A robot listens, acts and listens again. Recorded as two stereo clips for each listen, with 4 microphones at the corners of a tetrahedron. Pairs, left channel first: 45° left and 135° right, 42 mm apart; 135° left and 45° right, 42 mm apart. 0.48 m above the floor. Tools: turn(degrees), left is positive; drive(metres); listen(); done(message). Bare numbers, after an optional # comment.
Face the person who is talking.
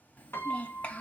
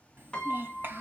# The child speaking: 10° right.
turn(-10)
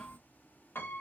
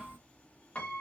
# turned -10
listen()
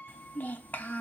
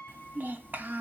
done("Found it: a child speaking, straight ahead.")